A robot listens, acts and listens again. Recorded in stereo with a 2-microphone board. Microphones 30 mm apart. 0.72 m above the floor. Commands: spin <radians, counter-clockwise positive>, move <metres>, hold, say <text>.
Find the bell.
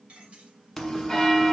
spin 0.52
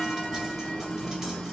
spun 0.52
spin 2.53
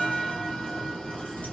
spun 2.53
spin 0.52
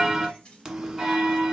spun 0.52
spin -0.26
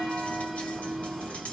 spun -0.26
say Found it: a bell, straight ahead, 1 to 2 m away.